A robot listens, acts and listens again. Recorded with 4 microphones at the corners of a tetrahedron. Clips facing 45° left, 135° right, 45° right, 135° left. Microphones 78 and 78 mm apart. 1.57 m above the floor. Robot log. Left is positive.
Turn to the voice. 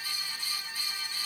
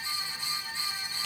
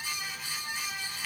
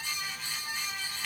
cmd idle
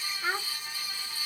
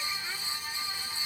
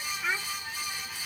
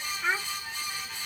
note: The child speaking: 65° left.
cmd yaw +65
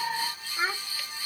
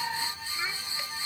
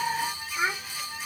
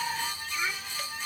end: Found it: a child speaking, straight ahead.